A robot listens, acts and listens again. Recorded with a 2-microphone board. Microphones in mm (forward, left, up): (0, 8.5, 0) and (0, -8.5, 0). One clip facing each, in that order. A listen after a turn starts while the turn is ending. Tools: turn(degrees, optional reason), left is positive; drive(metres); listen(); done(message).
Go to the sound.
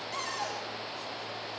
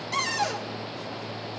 turn(degrees=-45, reason="The cupboard door: about 45° right or 135° right.")
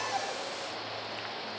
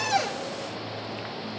listen()
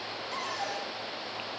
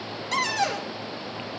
turn(degrees=-85, reason="So it is at 85° right.")
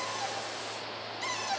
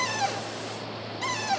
turn(degrees=-20, reason="The cupboard door is now 20° right.")
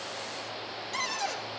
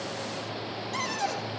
drive(metres=1.0)
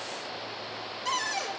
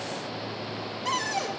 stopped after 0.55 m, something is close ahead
done("Blocked. The cupboard door is further on, straight ahead.")